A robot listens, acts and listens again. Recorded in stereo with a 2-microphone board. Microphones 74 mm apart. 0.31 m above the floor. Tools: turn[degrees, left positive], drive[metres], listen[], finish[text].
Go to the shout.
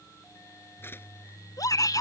Thought: The shout: about 55° left or 125° left.
Action: turn[55]
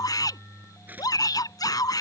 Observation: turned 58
Thought: So it is at 65° left.
Action: turn[65]
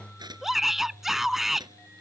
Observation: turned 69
Action: drive[1.0]
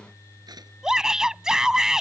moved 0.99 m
Thought: The shout is now 10° right.
Action: turn[-10]
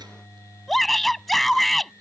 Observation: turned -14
Action: drive[1.0]
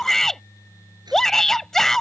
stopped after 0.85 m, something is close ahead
Thought: The shout is now 10° left.
Action: turn[10]
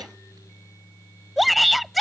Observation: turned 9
Action: finish[Arrived at the shout, straight ahead.]